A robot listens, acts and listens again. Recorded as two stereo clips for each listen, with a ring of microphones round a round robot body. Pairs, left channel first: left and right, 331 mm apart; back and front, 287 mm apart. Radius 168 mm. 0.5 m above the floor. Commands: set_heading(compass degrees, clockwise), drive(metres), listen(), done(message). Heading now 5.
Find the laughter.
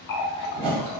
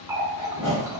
listen()
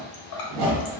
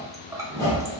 listen()
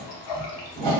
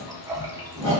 done("I can't make out laughter to turn to.")